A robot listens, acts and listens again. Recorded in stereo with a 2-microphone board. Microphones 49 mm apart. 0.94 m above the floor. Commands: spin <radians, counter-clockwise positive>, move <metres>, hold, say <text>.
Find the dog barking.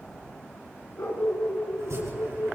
spin 1.22
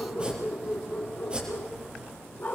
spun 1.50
spin 0.52
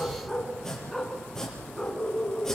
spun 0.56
spin 0.17
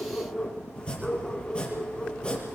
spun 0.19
say Facing the dog barking, 2 to 4 m away.